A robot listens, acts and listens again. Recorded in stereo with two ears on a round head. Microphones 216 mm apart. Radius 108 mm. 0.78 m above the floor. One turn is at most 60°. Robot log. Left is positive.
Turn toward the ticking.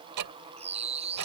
cmd yaw -60
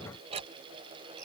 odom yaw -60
note: So it is at 25° right.
cmd yaw -25
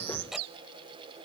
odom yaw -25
end: Facing the ticking.